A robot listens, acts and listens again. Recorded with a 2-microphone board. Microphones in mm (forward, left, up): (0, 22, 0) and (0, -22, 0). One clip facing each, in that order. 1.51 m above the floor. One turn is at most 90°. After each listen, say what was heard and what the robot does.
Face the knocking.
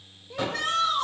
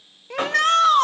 The knocking: about 55° right or 125° right. Turn 55° right.
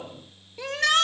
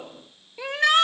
Keep listening.
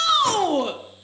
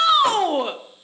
Keep listening.
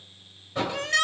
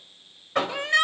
So it is at 70° right. Turn 70° right.
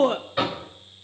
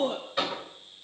The knocking is now 10° left. Turn 10° left.
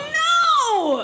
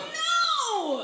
Keep listening.
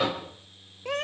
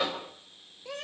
Facing the knocking.